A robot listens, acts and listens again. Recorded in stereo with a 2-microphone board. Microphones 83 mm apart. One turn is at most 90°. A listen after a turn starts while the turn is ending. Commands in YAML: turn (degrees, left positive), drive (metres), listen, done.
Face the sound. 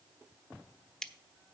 turn: 30
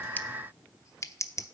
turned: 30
turn: 90
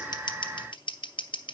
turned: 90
turn: 85
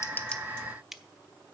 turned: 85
listen: true
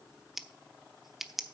done: "Found it: scissors, straight ahead."